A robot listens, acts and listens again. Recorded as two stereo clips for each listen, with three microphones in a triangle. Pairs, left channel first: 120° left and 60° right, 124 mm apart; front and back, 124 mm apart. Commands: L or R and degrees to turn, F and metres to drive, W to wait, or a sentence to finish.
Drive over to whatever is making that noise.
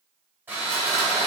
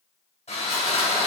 L10
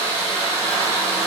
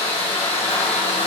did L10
F1.0
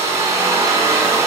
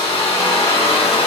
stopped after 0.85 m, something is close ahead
I am next to the sawing.